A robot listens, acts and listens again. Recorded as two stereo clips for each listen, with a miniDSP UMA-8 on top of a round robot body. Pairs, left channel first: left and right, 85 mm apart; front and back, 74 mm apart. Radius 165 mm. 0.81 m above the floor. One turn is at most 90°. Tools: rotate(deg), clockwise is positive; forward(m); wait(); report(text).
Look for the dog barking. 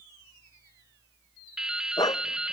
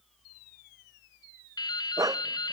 rotate(-90)
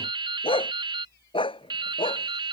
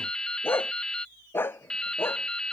rotate(-65)
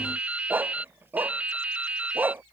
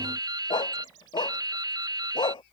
rotate(20)
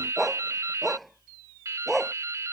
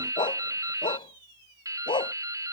report("Found it: a dog barking, straight ahead.")